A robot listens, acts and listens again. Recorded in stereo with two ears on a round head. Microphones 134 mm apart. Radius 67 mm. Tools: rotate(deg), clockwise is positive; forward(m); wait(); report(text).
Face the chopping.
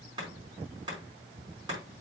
rotate(25)
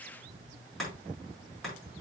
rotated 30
report("Facing the chopping, over 4 m away.")